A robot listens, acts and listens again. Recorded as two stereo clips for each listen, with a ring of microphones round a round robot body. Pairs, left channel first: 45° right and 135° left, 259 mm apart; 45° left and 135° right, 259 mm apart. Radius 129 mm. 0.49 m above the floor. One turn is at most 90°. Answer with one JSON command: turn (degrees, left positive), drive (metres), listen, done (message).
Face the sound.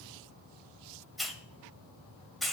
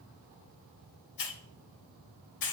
{"turn": 45}
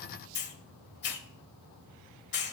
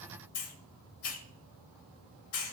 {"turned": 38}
{"done": "Found it: a hiss, straight ahead, 1 to 2 m away."}